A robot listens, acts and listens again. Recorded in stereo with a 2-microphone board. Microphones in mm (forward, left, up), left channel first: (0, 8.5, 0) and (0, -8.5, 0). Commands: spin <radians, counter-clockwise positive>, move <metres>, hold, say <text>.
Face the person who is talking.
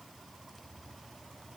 hold
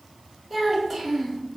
spin 0.52
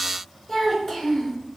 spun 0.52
spin 2.71
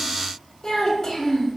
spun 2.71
spin 0.44
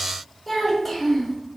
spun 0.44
say Facing the child speaking.